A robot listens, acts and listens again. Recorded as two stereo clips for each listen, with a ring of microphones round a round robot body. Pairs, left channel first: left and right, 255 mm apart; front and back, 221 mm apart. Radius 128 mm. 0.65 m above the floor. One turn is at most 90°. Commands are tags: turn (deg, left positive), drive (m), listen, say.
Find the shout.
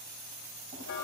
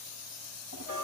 <listen/>
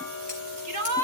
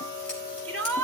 <turn deg="-85"/>
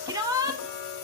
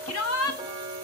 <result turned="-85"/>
<turn deg="-15"/>
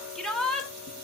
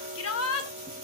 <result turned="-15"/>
<say>Found it: a shout, straight ahead, 2 to 4 m away.</say>